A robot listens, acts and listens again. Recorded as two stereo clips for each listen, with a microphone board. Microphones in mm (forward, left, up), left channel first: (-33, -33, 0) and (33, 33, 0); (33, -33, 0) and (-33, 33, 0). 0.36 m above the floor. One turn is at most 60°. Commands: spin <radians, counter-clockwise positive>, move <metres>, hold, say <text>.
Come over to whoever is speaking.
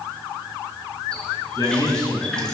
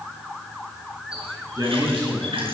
spin 1.05
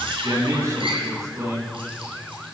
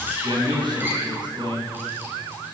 spin 1.05
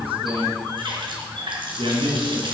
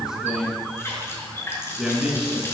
spin 0.96
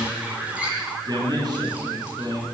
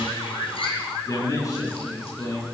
move 1.0
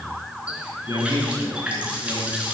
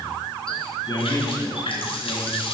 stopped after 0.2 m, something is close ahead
say Something is in my way. I am facing the man speaking but have not reached it.